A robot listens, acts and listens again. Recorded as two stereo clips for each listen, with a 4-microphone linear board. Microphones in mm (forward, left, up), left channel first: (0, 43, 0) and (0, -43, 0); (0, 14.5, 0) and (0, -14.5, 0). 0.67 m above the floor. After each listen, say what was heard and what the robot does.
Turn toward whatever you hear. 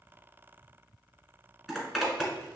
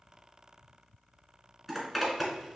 Turn 30° right.
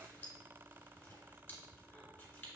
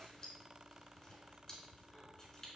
Keep listening.
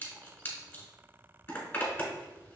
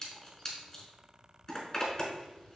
So it is at 25° left. Turn 25° left.
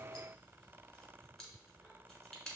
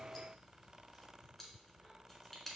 Found it: a zipper, straight ahead.